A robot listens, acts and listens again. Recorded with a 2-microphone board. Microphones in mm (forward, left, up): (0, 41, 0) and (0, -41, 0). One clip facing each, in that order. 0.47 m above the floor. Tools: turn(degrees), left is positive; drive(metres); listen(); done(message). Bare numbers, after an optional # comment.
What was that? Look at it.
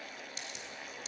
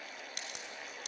# The crack: about 60° right or 120° right.
turn(-60)
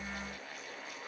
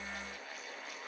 listen()
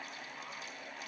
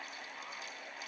done("I heard a crack, but can't make it out now. It was about straight ahead or 60° right.")